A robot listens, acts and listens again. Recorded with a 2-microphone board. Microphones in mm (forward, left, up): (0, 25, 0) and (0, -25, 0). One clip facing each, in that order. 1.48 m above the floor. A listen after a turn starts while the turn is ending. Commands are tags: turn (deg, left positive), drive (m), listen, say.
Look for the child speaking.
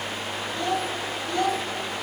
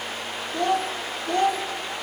<turn deg="-70"/>
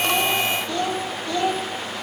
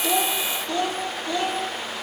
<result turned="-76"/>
<turn deg="-20"/>
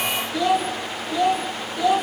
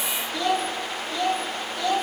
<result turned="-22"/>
<turn deg="15"/>
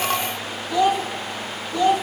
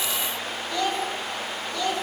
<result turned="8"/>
<turn deg="20"/>
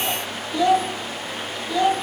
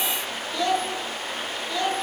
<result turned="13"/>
<turn deg="10"/>
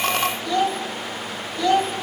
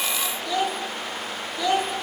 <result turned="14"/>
<say>Facing the child speaking.</say>